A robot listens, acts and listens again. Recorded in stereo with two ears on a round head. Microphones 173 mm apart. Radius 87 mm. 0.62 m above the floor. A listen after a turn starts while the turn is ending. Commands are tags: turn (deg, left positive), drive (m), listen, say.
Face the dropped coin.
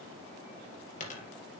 <turn deg="40"/>
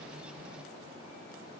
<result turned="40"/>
<listen/>
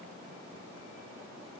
<say>I heard a dropped coin, but can't make it out now. It was about straight ahead or 100° left.</say>